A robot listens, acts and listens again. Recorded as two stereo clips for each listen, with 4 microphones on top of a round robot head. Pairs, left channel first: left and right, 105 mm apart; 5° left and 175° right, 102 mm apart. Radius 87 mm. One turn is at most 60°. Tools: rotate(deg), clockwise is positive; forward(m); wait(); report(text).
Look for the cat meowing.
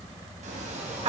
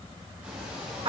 rotate(60)
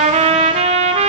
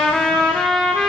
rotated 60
rotate(35)
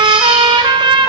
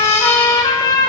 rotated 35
wait()
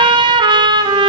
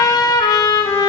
report("Facing where the cat meowing came from. I can't hear it now.")